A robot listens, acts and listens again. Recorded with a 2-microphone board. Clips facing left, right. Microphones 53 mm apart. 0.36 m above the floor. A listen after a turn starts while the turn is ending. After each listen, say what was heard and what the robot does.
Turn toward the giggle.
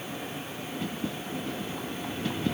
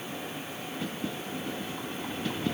Keep listening.
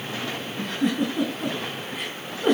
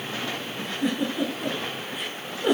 The giggle: about 45° left or 135° left. Turn 45° left.
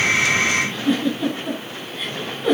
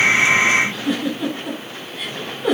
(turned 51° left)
Found it: a giggle, straight ahead, over 4 m away.